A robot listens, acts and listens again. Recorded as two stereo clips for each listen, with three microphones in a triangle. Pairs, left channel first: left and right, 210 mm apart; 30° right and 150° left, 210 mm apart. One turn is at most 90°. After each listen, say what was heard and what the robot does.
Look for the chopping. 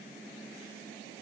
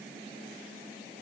Keep listening.
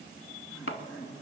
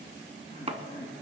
The chopping: 90° left. Turn 90° left.
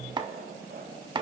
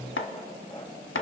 The chopping is now 20° right. Turn 20° right.
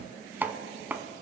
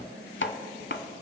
The chopping is now 10° right. Turn 10° right.
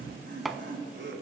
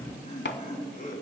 Facing the chopping, under 1 m away.